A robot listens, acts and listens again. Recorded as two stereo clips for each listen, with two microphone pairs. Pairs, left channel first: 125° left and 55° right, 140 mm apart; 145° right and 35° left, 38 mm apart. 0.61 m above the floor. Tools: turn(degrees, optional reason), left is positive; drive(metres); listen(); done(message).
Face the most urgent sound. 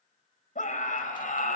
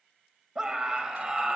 turn(degrees=110, reason="The scream: 110° left.")
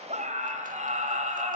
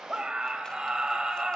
turn(degrees=-30, reason="The scream is now 30° right.")
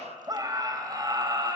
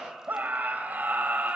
done("Facing the scream.")